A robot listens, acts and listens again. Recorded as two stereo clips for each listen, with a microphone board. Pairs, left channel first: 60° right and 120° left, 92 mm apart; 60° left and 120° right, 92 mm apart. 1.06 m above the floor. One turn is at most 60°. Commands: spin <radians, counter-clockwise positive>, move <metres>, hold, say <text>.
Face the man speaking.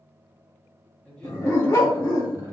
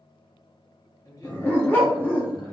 say Found it: a man speaking, straight ahead.